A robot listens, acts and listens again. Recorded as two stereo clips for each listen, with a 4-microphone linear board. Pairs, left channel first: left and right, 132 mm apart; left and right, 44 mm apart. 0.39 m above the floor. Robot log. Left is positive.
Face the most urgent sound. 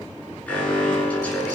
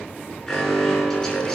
cmd yaw +30
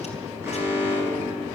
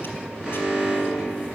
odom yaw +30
note: So it is at 20° right.
cmd yaw -20
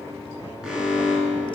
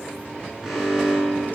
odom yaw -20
end: Facing the alarm, over 4 m away.